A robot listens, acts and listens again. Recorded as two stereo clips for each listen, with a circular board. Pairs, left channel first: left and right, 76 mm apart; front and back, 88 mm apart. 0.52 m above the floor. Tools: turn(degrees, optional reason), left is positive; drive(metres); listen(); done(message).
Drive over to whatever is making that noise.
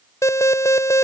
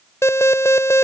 turn(degrees=50, reason="The alarm: 50° left.")
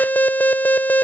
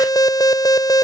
turn(degrees=30, reason="The alarm is now 30° left.")
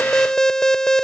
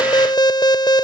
turn(degrees=10, reason="The alarm is now 10° left.")
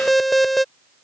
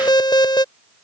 drive(metres=1.0)
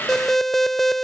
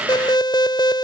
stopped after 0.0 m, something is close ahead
done("Something is in my way. I am facing the alarm but have not reached it.")